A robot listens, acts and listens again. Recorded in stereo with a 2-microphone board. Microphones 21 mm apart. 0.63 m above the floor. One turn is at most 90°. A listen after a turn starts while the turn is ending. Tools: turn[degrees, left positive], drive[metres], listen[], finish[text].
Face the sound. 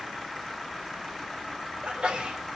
Thought: The sneeze: about 65° right or 115° right.
Action: turn[-65]
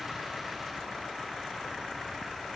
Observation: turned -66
Action: listen[]
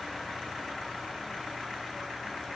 Action: finish[I heard a sneeze, but can't make it out now. It was about straight ahead or 50° right.]